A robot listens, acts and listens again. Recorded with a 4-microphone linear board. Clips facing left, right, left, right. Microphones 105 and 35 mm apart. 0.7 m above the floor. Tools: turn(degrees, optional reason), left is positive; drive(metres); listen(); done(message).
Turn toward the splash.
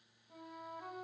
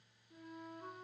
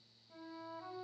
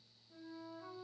listen()
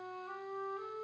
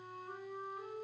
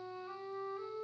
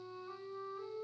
listen()
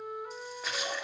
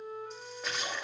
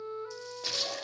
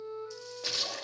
turn(degrees=30)
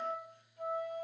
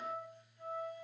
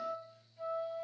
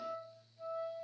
listen()
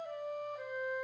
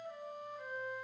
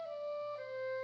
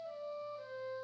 done("I heard a splash, but can't make it out now. It was about 30° right or 150° left.")